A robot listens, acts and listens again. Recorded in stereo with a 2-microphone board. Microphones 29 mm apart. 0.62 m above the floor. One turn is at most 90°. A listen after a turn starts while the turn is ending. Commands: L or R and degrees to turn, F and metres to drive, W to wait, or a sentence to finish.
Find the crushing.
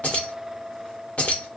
W
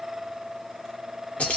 W
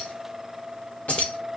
I can't make out crushing, only keys jangling.